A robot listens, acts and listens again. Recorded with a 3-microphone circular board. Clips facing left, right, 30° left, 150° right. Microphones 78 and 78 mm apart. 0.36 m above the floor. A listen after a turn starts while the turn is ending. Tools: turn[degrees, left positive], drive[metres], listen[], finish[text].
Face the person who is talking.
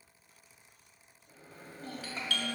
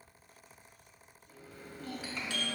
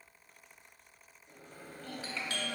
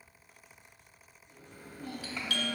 Thought: The child speaking: 140° left.
Action: turn[140]
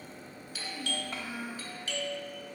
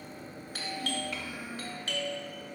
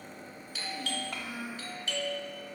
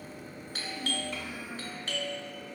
Thought: The child speaking is now 45° left.
Action: turn[45]
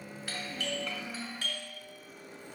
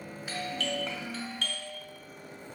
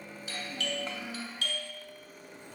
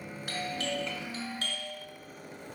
Thought: The child speaking is now 30° right.
Action: turn[-30]
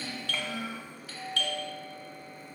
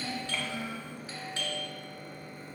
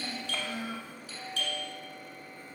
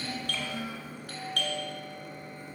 Action: finish[Found it: a child speaking, straight ahead.]